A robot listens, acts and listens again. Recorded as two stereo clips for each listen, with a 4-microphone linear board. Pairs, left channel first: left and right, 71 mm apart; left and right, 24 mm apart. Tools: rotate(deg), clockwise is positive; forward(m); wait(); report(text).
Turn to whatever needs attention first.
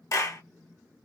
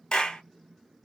wait()
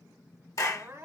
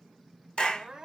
rotate(35)
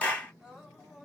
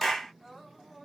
report("Facing the crying.")